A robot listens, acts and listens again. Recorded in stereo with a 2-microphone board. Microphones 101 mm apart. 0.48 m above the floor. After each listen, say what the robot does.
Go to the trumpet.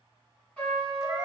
Turn 30° left.
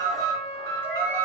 Turn 20° right.
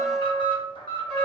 Drive 1.0 m forward.
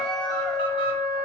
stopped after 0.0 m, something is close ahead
Blocked. The trumpet is further on, straight ahead.